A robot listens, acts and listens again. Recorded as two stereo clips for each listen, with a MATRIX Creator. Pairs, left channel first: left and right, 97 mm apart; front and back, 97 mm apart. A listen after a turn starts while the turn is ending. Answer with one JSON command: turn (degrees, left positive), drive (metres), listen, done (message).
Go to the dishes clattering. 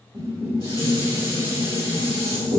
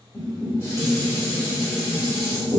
{"turn": -60}
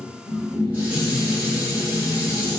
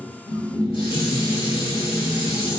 {"turn": -15}
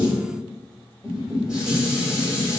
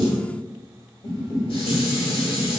{"drive": 1.0}
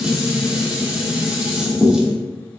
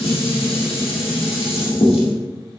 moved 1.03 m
{"drive": 1.0}
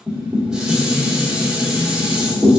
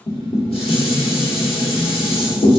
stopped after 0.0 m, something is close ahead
{"turn": -10}
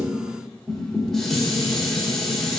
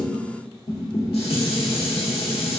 {"done": "Arrived at the dishes clattering, straight ahead."}